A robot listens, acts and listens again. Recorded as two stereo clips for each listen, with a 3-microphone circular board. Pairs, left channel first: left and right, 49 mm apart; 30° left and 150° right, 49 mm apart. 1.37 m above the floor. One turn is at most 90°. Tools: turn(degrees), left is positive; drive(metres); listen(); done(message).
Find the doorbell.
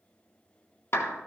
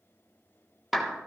listen()
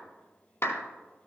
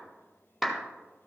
listen()
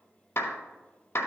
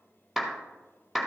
done("I can't make out a doorbell to turn to.")